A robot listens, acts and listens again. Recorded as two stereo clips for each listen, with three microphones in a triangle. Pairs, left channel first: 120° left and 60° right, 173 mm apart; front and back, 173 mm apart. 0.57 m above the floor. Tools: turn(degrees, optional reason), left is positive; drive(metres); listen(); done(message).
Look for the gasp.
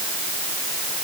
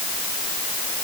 listen()
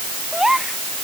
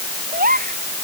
turn(degrees=-150, reason="The gasp: 150° right.")
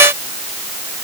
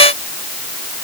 done("I heard a gasp from this way, but can't make it out now.")